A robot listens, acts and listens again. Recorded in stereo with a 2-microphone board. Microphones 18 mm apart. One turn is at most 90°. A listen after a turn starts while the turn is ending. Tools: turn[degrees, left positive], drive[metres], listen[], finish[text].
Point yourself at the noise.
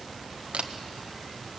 Action: turn[-90]
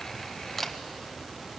Thought: So it is at 10° left.
Action: turn[10]
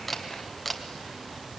Action: finish[Facing the camera shutter.]